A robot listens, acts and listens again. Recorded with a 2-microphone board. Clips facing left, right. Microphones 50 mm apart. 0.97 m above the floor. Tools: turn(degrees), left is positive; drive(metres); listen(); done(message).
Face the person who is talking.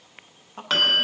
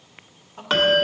turn(degrees=30)
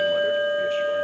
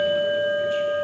listen()
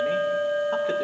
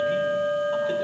listen()
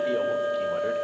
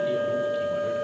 done("I heard a man speaking, but can't make it out now. It was about straight ahead or 120° left.")